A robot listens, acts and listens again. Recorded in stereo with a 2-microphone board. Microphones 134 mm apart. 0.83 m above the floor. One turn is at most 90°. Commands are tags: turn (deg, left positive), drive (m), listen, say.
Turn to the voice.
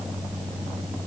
<listen/>
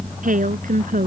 <turn deg="-90"/>
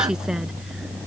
<listen/>
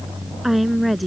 <say>Found it: a woman speaking, straight ahead.</say>